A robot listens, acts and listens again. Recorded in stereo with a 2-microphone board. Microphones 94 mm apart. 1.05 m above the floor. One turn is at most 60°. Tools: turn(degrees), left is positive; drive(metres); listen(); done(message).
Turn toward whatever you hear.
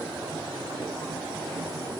listen()
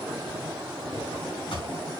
turn(degrees=60)
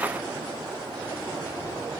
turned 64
listen()
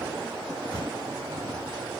turn(degrees=50)
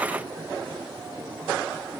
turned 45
listen()
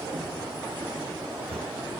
done("Facing the drawer.")